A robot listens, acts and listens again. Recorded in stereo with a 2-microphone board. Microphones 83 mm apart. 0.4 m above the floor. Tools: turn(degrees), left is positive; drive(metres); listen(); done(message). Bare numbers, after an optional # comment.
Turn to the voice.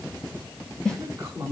# The woman speaking: about 30° right or 150° right.
turn(-30)
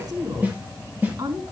# So it is at 130° right.
turn(-130)
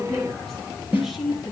done("Found it: a woman speaking, straight ahead.")